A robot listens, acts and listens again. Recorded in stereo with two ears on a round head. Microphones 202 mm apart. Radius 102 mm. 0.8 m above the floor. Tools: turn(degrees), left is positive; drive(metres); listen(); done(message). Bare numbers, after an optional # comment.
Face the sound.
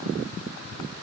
listen()
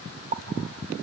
# The pop: about 35° right or 145° right.
turn(-35)
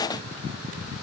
listen()
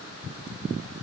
done("I heard a pop, but can't make it out now. It was about straight ahead or 110° right.")